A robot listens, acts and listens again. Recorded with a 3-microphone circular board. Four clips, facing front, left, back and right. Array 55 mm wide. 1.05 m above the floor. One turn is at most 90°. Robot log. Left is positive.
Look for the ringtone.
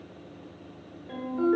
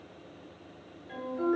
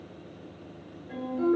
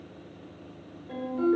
note: The ringtone: 15° right.
cmd yaw -15
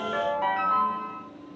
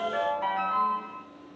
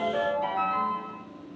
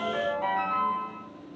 end: Found it: a ringtone, straight ahead.